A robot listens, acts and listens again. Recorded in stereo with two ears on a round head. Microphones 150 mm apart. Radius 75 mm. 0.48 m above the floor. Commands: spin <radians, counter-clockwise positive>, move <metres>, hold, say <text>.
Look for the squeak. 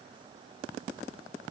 hold
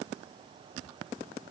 hold
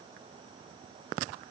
say I can't make out a squeak to turn to.